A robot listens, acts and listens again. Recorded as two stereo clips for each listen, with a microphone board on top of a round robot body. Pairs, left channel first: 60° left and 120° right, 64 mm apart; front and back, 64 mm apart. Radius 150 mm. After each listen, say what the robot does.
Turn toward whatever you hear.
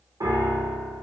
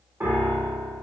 Turn 125° right.
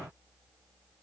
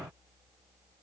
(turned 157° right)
Turn 30° left.
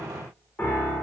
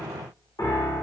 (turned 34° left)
Facing the piano, under 1 m away.